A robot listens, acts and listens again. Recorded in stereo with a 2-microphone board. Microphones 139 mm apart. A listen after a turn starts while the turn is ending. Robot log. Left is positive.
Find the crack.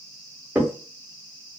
cmd yaw -30
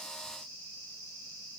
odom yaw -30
cmd idle
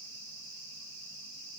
end: I heard a crack, but can't make it out now. It was about 15° left or 135° right.